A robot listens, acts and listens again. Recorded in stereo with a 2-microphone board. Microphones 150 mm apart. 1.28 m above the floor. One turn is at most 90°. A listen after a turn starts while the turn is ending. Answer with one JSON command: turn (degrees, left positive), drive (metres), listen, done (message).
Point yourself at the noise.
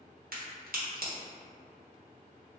{"turn": -90}
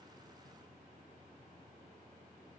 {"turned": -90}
{"done": "Facing where the crack came from. I can't hear it now."}